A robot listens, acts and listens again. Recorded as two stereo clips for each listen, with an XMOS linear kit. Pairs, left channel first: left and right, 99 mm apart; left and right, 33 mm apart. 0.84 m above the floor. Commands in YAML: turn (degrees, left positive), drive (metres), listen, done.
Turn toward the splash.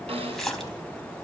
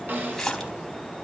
turn: 30
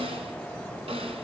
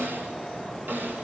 listen: true
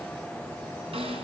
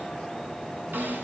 done: "I heard a splash, but can't make it out now. It was about 25° right or 145° left."